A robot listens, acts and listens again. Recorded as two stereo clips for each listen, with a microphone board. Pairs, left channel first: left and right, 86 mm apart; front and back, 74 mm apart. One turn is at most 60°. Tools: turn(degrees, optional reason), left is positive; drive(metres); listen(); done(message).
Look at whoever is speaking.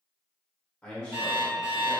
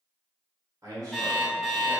turn(degrees=60, reason="The man speaking: 165° left.")
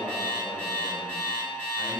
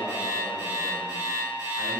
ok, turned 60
turn(degrees=60, reason="Nothing new. It was at 105° left.")
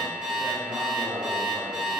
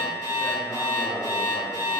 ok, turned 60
turn(degrees=60, reason="The man speaking is now 70° left.")
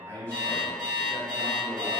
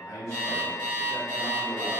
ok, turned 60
turn(degrees=30, reason="The man speaking is now 30° left.")
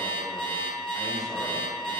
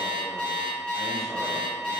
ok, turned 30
listen()
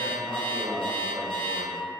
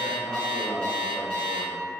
done("Found it: a man speaking, straight ahead, 1 to 2 m away.")